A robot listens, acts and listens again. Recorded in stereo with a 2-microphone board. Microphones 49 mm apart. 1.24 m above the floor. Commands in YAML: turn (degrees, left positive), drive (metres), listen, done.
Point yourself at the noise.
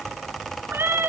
turn: -55
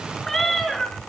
done: "Facing the cat meowing."